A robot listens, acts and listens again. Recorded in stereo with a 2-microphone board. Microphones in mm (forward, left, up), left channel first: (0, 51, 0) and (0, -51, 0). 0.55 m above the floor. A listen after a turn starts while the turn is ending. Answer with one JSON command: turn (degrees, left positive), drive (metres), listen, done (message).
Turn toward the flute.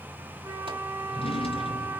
{"turn": -25}
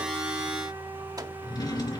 {"listen": true}
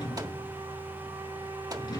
{"listen": true}
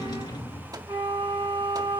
{"turn": -130}
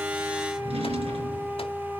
{"done": "Facing the flute."}